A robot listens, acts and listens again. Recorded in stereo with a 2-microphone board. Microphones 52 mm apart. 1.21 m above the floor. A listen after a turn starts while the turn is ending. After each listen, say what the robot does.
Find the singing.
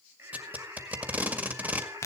Turn 70° right.
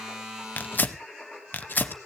Turn 10° right.
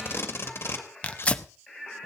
Facing the singing.